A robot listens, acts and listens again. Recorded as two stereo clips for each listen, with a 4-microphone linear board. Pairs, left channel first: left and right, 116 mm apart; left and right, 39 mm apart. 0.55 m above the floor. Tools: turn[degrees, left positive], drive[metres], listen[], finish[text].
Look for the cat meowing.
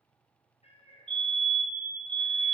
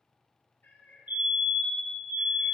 Thought: The cat meowing: about 60° left or 120° left.
Action: turn[60]
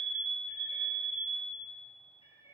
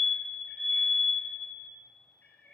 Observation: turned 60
Thought: So it is at 55° left.
Action: turn[55]
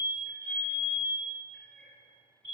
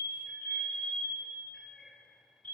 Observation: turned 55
Action: finish[Found it: a cat meowing, straight ahead, 2 to 4 m away.]